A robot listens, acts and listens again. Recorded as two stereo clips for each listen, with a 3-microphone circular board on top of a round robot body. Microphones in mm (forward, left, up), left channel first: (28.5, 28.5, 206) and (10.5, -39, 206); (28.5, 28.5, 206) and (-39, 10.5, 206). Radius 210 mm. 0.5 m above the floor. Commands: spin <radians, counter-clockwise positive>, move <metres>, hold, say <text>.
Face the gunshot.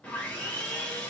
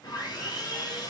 hold
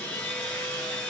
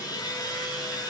hold
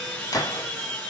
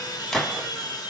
spin 1.66
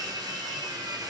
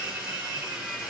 say I heard a gunshot from this way, but can't make it out now.